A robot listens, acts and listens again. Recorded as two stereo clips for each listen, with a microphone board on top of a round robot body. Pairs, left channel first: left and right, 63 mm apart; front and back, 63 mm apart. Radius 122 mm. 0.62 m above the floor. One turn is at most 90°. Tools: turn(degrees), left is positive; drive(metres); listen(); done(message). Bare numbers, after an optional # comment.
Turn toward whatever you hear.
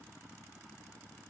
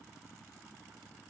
listen()
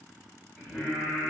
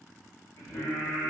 # The singing: 30° left.
turn(30)
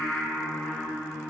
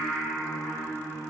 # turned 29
# The singing is now 20° left.
turn(20)
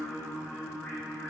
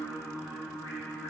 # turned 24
# The singing is now 20° left.
turn(20)
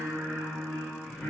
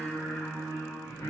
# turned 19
# The singing is now 15° left.
turn(15)
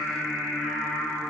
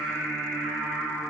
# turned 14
done("Found it: singing, straight ahead, 1 to 2 m away.")